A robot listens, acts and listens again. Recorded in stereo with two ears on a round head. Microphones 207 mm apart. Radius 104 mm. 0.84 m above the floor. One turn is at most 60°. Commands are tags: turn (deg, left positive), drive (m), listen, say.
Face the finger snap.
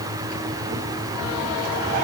<listen/>
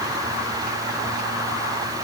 <listen/>
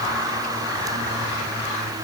<say>I can't make out a finger snap to turn to.</say>